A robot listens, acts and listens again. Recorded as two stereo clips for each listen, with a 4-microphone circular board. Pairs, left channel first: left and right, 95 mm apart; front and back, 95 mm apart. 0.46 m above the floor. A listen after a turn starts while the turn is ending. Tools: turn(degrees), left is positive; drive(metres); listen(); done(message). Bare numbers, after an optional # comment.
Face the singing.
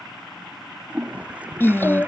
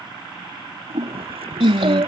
# The singing: 155° left.
turn(155)
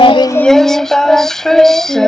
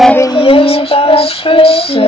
done("Facing the singing.")